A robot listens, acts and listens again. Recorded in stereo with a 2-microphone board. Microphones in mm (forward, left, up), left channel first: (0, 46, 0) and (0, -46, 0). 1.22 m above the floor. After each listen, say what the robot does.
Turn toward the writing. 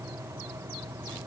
Keep listening.
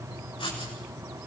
Turn 90° left.
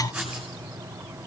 Facing the writing, over 4 m away.